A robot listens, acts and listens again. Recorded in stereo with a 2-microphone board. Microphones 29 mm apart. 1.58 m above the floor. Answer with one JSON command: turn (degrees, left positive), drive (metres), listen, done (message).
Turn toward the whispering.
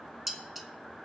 {"listen": true}
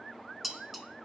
{"listen": true}
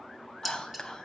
{"turn": 25}
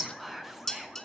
{"done": "Facing the whispering, 1 to 2 m away."}